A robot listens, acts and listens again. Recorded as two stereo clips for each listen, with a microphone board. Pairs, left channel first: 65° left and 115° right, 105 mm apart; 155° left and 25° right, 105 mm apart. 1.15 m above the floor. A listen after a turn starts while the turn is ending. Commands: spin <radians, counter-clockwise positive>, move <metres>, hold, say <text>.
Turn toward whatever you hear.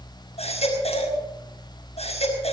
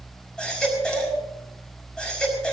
spin 1.31
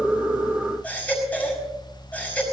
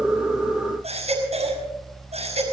spin -0.17
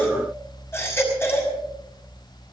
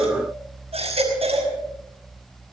say Facing the baby crying.